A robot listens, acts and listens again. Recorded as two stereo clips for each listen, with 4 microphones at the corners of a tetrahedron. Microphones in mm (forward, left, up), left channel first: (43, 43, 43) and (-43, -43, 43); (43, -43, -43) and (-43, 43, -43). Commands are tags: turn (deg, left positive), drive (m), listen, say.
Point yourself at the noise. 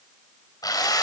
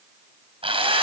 <turn deg="100"/>
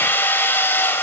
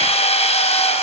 <turn deg="-25"/>
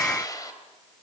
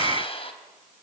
<turn deg="-10"/>
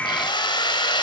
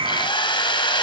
<say>Facing the drill.</say>